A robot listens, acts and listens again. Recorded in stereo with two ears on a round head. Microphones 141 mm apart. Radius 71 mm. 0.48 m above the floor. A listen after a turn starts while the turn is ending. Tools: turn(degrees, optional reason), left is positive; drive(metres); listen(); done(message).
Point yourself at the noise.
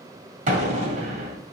turn(degrees=-50, reason="The explosion: about 50° right or 130° right.")
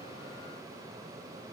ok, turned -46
listen()
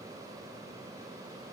done("I heard an explosion, but can't make it out now. It was about 5° right or 80° right.")